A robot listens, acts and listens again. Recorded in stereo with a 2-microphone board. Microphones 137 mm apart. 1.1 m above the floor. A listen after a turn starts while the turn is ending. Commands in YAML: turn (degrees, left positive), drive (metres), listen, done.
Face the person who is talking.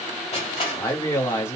turn: 20
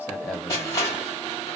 done: "Found it: a man speaking, straight ahead, 1 to 2 m away."